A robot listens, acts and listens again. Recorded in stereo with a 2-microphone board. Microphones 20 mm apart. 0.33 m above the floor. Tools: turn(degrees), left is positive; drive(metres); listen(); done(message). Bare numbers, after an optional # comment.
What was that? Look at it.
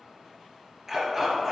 # The dog barking: about 15° right or 165° right.
turn(-15)
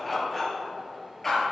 # So it is at 15° left.
turn(15)
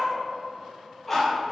# The dog barking is now 10° left.
turn(10)
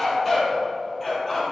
# The dog barking is now 10° left.
turn(10)
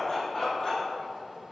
done("Facing the dog barking.")